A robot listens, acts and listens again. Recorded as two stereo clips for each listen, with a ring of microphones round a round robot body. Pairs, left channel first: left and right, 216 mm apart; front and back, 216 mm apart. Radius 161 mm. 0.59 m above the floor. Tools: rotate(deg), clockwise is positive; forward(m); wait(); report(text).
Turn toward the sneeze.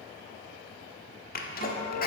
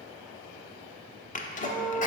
rotate(-50)
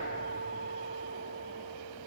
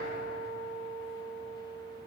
report("I heard a sneeze from this way, but can't make it out now.")